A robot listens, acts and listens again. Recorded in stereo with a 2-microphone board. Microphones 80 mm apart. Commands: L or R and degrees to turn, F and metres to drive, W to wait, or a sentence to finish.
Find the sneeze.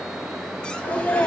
L20
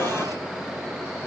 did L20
Facing the sneeze.